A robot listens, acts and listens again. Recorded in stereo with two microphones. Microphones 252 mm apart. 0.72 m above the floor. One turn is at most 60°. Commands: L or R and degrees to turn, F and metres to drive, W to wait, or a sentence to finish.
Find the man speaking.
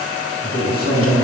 L40
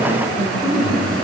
Facing the man speaking.